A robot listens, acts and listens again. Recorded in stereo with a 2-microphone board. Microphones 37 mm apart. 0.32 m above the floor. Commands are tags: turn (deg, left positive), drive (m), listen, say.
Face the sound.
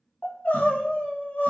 <turn deg="45"/>
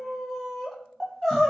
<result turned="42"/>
<turn deg="10"/>
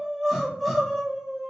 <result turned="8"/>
<say>Facing the crying, under 1 m away.</say>